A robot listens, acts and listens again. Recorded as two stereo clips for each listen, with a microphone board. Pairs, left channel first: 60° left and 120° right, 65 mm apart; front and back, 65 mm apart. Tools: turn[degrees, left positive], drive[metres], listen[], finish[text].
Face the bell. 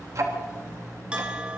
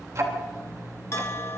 Thought: The bell: 45° right.
Action: turn[-45]
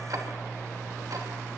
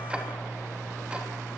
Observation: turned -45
Action: listen[]
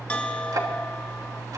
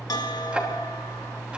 Thought: The bell is now 10° right.
Action: turn[-10]
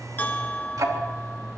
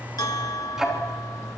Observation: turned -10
Action: finish[Found it: a bell, straight ahead.]